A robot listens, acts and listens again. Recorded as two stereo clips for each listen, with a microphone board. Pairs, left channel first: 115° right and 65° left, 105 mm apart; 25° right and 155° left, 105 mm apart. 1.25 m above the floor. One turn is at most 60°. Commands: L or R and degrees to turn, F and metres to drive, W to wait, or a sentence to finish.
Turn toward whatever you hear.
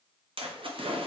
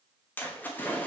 L50
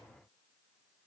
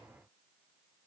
Facing where the splash came from. I can't hear it now.